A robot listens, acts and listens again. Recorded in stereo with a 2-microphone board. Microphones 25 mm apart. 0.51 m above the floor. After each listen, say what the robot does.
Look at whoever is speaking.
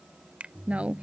Turn 45° right.
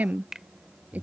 Turn 90° right.
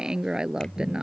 Turn 30° right.
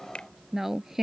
Turn 15° right.
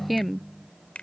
Facing the woman speaking.